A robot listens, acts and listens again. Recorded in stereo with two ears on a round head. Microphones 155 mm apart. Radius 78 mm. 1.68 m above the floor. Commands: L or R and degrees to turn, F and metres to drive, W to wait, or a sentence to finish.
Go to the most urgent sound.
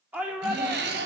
R30
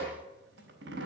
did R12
W
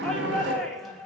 F1.0
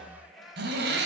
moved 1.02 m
F1.0
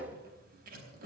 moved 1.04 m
W
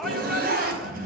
W
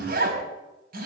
Facing where the shout came from. I can't hear it now. I did not reach it.